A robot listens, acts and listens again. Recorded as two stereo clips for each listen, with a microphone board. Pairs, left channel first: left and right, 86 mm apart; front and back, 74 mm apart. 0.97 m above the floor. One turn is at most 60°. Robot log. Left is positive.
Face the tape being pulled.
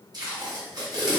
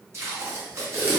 note: The tape being pulled: 130° right.
cmd yaw -60
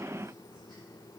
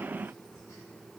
note: Nothing new. It was at 70° right.
cmd yaw -60
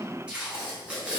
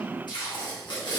note: The tape being pulled is now 10° right.
cmd yaw -10
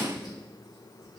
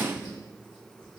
cmd idle
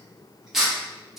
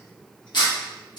end: Facing the tape being pulled, under 1 m away.